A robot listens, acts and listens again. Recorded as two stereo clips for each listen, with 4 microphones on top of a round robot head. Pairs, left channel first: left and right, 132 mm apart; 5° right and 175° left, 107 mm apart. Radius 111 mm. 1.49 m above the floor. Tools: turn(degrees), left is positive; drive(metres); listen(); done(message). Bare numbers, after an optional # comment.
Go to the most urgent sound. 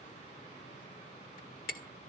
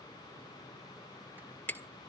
listen()
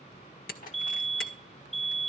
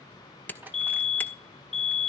drive(1.0)
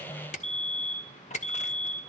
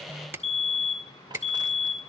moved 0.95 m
# The fire alarm is now 10° left.
turn(10)
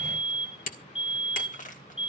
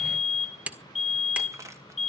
drive(1.0)
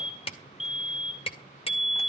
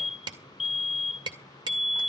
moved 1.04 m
drive(1.0)
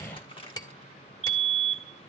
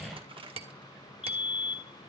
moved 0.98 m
drive(1.0)
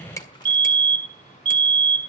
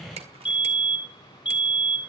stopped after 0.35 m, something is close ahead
# The fire alarm is now 10° left.
turn(10)
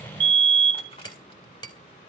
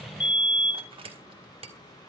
done("I am next to the fire alarm.")